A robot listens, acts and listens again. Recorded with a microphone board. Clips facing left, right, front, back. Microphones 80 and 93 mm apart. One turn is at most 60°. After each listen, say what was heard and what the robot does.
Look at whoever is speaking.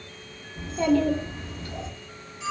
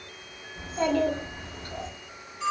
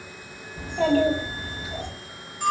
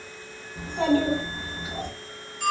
The child speaking: 125° right. Turn 60° right.
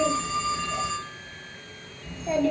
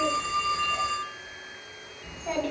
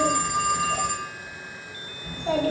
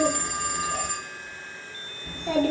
The child speaking is now 65° right. Turn 60° right.
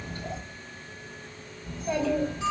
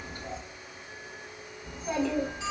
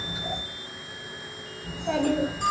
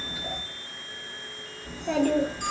The child speaking is now 20° right. Turn 20° right.
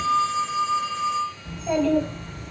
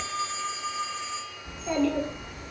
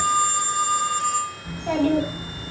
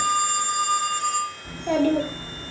Found it: a child speaking, straight ahead.